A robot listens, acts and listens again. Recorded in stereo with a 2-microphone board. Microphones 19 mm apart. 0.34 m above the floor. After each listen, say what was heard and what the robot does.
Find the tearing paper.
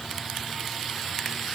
Keep listening.
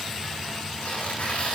Turn 90° left.
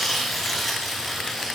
Facing the tearing paper.